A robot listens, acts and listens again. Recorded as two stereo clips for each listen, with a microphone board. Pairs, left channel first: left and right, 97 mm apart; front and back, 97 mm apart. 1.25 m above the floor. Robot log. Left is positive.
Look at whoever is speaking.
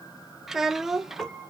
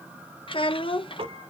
end: Found it: a child speaking, straight ahead.